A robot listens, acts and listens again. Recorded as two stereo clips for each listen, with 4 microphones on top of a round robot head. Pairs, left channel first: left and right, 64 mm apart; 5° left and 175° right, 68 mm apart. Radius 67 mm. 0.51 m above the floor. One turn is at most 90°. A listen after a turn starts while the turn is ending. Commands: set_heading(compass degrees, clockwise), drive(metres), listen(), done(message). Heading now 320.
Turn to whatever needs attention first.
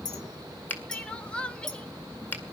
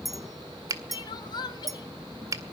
set_heading(305)
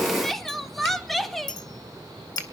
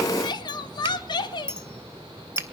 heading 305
done("Found it: crying, straight ahead, 1 to 2 m away.")